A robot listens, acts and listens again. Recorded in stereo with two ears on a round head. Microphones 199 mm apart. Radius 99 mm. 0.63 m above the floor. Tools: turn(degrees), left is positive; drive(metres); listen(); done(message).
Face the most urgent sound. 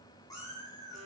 listen()
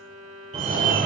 turn(degrees=-30)
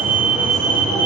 done("Found it: a fire alarm, straight ahead, 2 to 4 m away.")